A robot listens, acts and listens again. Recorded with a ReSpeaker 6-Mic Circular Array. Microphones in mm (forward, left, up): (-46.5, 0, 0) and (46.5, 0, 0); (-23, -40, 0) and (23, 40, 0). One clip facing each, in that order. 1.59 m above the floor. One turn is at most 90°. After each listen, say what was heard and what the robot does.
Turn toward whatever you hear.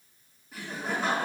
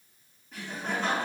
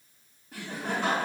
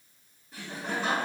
The laughter: 100° right. Turn 90° right.
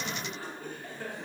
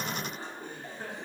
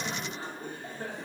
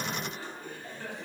The laughter is now 70° right. Turn 70° right.
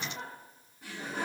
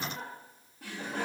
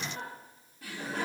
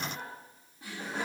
Facing the laughter.